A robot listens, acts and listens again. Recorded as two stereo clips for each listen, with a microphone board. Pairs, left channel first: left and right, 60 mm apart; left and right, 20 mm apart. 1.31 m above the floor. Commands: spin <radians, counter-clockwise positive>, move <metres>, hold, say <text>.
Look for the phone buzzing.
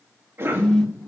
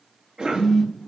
spin 0.35
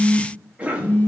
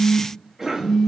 spin 2.44
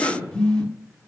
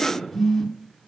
spin 0.26
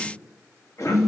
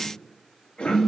say Facing the phone buzzing.